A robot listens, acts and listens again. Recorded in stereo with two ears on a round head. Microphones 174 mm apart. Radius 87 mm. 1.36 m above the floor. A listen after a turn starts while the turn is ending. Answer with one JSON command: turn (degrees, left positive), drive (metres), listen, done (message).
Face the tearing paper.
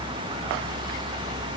{"listen": true}
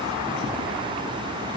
{"listen": true}
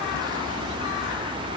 {"done": "I can't make out tearing paper."}